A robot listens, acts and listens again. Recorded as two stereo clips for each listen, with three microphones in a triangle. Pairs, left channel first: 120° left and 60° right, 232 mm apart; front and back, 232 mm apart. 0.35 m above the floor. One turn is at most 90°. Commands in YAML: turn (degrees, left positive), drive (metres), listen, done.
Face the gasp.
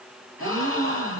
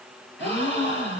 turn: -40
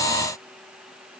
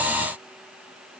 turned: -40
done: "I heard a gasp from this way, but can't make it out now."